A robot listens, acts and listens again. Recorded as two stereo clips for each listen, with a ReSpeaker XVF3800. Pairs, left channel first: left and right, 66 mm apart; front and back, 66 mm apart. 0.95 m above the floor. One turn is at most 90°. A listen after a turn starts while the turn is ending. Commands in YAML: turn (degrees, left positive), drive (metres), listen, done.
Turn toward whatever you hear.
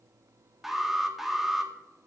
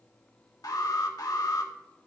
done: "Found it: an alarm, straight ahead, 2 to 4 m away."